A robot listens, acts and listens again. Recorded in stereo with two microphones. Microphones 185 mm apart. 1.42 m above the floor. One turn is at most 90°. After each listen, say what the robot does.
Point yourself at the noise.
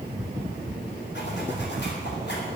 Turn 70° left.
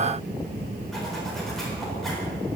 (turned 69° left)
Keep listening.
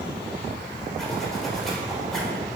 Found it: a zipper, straight ahead, 2 to 4 m away.